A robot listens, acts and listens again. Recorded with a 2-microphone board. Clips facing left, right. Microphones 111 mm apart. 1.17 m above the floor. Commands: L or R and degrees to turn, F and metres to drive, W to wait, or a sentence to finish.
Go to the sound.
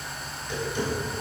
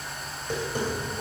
R50
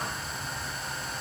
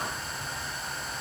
W
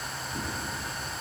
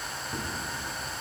W
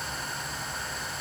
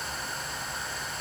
I heard tapping, but can't make it out now. It was about straight ahead or 80° right. I did not reach it.